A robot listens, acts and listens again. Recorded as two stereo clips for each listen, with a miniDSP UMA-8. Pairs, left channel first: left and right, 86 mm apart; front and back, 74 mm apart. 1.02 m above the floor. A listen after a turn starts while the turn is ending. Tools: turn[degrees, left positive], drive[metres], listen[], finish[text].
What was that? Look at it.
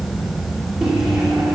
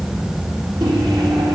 Thought: The microwave: 175° right.
Action: turn[-175]
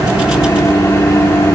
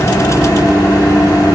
Thought: The microwave is now 30° left.
Action: turn[30]
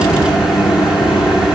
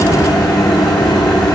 Thought: The microwave is now 10° right.
Action: turn[-10]
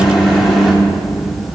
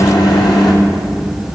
Action: finish[Facing the microwave, 2 to 4 m away.]